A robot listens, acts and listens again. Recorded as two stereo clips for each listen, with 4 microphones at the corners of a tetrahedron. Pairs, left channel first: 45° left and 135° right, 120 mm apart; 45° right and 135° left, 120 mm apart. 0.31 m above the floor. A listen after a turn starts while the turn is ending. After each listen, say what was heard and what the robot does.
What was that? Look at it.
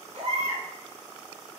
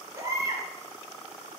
The baby crying: 165° right. Turn 165° right.
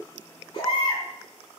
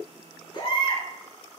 Facing the baby crying.